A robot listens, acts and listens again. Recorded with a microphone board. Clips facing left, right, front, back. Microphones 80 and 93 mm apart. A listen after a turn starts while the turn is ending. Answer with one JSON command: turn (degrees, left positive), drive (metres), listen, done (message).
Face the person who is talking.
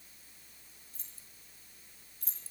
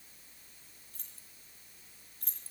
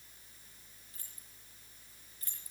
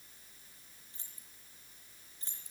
{"listen": true}
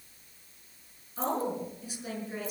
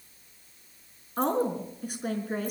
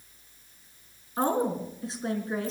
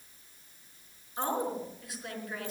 {"turn": -60}
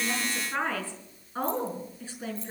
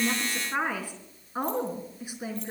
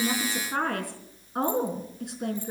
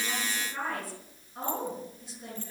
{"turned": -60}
{"turn": -15}
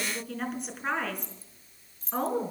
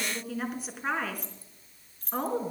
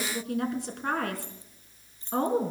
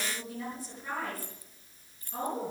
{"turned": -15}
{"done": "Found it: a woman speaking, straight ahead."}